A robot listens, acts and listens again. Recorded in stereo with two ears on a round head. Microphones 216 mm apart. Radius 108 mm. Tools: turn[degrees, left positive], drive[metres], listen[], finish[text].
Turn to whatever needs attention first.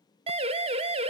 Thought: The siren: about 25° right or 155° right.
Action: turn[-25]
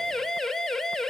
Action: finish[Facing the siren.]